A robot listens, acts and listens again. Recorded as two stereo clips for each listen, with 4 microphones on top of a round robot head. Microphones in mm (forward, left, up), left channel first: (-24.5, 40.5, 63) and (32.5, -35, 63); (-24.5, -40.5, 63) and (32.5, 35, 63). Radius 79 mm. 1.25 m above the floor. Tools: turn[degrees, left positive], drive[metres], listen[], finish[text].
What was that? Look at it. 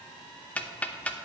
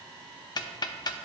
Thought: The ticking: 160° right.
Action: turn[-160]
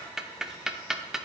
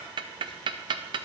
Thought: The ticking is now 30° left.
Action: turn[30]
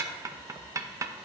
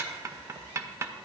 Action: finish[Found it: ticking, straight ahead.]